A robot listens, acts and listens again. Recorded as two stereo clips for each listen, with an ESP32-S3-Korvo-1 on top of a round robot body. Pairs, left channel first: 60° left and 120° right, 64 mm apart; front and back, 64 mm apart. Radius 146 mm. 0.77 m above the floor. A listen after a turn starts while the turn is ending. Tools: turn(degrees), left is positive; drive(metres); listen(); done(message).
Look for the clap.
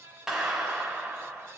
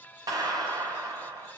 turn(degrees=155)
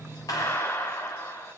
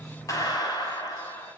turn(degrees=10)
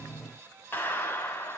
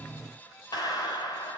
done("Facing the clap.")